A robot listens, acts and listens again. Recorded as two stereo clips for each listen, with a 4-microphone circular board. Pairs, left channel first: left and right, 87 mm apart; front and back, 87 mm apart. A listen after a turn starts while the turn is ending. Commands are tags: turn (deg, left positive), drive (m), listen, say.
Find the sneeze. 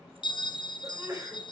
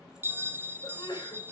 <turn deg="-35"/>
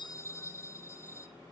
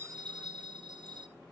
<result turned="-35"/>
<say>Facing where the sneeze came from. I can't hear it now.</say>